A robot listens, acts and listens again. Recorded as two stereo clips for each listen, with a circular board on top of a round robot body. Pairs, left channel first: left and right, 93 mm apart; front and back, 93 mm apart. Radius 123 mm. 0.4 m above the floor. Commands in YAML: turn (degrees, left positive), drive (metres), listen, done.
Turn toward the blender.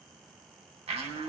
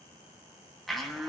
turn: -90
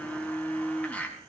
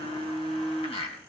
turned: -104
turn: 15
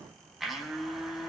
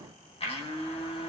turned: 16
done: "Found it: a blender, straight ahead, 2 to 4 m away."